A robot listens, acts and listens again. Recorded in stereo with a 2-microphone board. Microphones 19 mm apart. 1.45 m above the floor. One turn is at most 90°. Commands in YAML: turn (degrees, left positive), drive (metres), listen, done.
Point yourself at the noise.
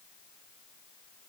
listen: true
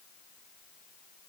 listen: true
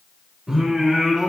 turn: -40
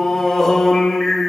turn: 15
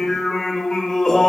turn: 15
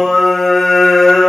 done: "Found it: singing, straight ahead, 2 to 4 m away."